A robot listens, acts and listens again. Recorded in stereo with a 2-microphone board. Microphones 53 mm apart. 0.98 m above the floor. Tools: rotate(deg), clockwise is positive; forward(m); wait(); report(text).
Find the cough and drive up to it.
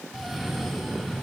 rotate(30)
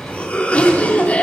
rotate(-25)
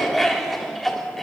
forward(1.0)
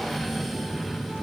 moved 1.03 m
forward(1.0)
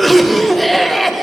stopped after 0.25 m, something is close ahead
report("Arrived at the cough, straight ahead.")